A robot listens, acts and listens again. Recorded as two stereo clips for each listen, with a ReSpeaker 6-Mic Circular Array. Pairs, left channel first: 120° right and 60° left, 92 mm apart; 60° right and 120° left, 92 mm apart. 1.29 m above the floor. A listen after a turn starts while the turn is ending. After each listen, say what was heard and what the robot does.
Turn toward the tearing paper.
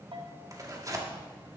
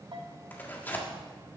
The tearing paper: 10° left. Turn 10° left.
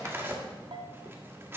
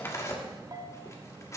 Found it: tearing paper, straight ahead, 1 to 2 m away.